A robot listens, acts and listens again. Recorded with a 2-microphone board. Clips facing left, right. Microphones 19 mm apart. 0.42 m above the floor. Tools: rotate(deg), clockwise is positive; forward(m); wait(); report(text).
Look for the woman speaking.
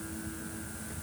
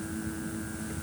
wait()
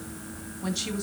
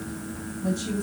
rotate(-55)
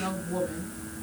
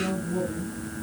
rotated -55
rotate(-60)
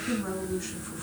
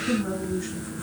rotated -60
rotate(-15)
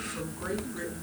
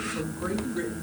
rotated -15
report("Found it: a woman speaking, straight ahead.")